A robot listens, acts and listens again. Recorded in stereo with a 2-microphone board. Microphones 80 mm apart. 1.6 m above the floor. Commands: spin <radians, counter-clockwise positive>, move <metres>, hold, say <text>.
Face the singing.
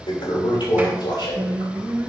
spin -0.44
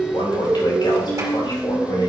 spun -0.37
spin 0.17
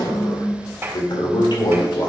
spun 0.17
spin 0.26
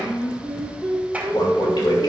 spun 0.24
spin 0.35
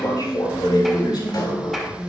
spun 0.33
say Facing the singing, 2 to 4 m away.